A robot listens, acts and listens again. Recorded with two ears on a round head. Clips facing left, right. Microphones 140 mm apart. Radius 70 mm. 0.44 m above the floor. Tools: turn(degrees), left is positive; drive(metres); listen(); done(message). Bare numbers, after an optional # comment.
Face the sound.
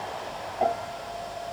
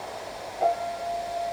# The piano: about 45° left or 135° left.
turn(45)
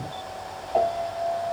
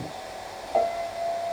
done("Facing the piano.")